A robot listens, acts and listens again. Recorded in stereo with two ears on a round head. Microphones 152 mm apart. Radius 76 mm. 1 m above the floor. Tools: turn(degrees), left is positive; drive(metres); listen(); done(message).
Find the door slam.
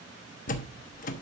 turn(degrees=50)
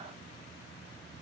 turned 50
listen()
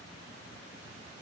done("I heard a door slam, but can't make it out now. It was about straight ahead or 80° left.")